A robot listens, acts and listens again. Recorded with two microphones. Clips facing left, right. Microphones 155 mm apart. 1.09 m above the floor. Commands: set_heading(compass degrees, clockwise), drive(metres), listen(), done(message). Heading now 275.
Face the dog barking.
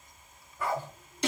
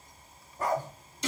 set_heading(315)
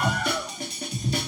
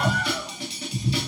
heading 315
listen()
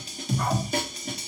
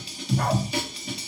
listen()
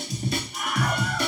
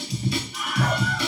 done("I heard a dog barking, but can't make it out now. It was about straight ahead or 100° right.")